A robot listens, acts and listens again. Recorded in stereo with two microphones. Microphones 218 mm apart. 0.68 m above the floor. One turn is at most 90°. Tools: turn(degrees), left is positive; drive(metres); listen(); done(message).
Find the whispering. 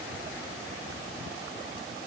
listen()
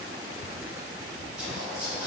turn(degrees=-30)
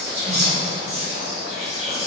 turn(degrees=-90)
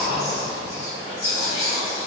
turn(degrees=-60)
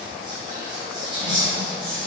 turn(degrees=-25)
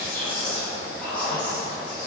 done("Found it: whispering, straight ahead, 1 to 2 m away.")